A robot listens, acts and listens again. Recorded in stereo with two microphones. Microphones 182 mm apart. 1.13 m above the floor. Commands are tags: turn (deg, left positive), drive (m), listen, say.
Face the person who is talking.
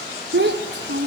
<turn deg="-75"/>
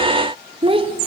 <turn deg="-30"/>
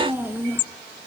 <turn deg="-10"/>
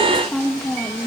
<say>Found it: a child speaking, straight ahead, 1 to 2 m away.</say>